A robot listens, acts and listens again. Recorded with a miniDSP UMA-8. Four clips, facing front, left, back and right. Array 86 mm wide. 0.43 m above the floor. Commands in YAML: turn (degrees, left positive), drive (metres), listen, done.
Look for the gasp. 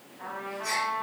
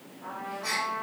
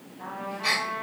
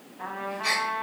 turn: -145
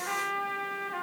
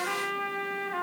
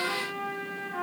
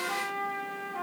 done: "Facing where the gasp came from. I can't hear it now."